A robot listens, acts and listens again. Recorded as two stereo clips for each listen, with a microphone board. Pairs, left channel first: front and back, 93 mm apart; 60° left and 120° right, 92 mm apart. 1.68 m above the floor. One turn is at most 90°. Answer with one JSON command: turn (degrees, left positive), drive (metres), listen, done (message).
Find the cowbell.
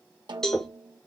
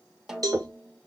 {"turn": -80}
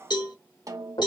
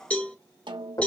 {"turn": -10}
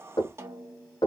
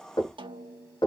{"listen": true}
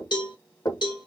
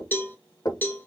{"done": "Facing the cowbell."}